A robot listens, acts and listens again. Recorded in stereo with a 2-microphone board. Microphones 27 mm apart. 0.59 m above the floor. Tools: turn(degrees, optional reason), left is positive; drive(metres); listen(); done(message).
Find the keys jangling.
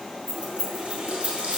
turn(degrees=70, reason="The keys jangling: about 70° left or 110° left.")
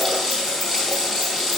listen()
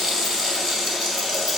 listen()
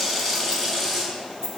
turn(degrees=20, reason="So it is at 20° left.")
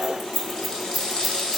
done("Found it: keys jangling, straight ahead, 1 to 2 m away.")